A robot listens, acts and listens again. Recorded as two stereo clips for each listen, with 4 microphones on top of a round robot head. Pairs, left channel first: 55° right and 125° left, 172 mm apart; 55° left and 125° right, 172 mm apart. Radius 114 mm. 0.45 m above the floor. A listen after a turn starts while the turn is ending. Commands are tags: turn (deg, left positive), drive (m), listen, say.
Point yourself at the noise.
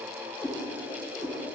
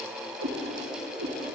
<turn deg="-145"/>
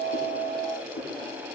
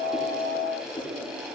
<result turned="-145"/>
<listen/>
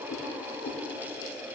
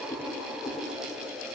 <turn deg="-30"/>
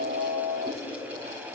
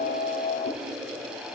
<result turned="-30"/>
<listen/>
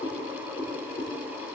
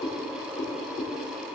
<say>Facing the cat meowing, over 4 m away.</say>